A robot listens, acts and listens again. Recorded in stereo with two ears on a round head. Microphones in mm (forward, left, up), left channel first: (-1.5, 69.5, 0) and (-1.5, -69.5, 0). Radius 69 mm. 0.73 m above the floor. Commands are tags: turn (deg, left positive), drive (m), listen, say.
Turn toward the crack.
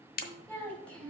<turn deg="55"/>
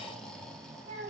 <listen/>
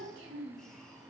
<say>I heard a crack, but can't make it out now. It was about straight ahead or 70° left.</say>